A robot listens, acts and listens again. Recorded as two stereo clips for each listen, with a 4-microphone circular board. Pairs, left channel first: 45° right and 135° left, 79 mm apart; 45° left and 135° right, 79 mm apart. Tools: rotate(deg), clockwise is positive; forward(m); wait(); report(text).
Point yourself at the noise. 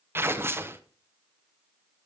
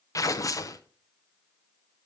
rotate(-80)
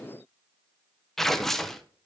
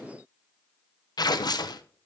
rotate(-40)
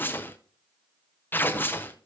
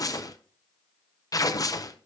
rotate(-15)
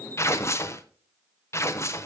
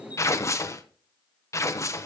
report("Found it: tearing paper, straight ahead, under 1 m away.")